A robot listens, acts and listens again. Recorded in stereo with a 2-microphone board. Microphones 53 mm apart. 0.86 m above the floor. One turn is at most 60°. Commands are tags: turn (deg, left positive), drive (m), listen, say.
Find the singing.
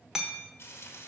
<listen/>
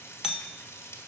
<listen/>
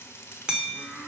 <turn deg="-60"/>
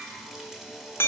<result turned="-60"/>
<turn deg="-30"/>
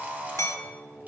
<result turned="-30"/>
<turn deg="-40"/>
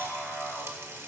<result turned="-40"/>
<turn deg="-10"/>
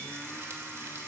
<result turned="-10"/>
<listen/>
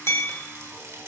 <listen/>
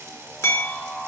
<say>Found it: singing, straight ahead, over 4 m away.</say>